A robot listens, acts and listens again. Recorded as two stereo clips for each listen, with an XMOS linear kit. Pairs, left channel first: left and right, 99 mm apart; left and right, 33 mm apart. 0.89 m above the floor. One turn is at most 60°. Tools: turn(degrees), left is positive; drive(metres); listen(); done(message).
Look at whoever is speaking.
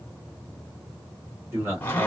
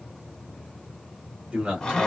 turn(degrees=-25)
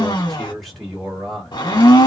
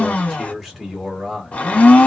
done("Facing the man speaking, 2 to 4 m away.")